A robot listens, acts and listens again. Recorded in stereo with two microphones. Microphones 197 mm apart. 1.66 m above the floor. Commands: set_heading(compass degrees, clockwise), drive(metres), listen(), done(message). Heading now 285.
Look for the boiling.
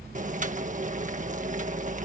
set_heading(325)
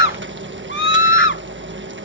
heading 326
set_heading(61)
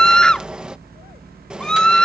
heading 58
done("Facing the boiling.")